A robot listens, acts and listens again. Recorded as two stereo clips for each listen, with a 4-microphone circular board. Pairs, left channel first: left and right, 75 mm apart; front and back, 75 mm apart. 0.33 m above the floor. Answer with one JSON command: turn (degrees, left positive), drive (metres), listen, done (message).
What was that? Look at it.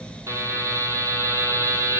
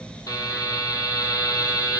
{"turn": -40}
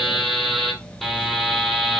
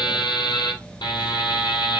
{"done": "Found it: a buzzer, straight ahead."}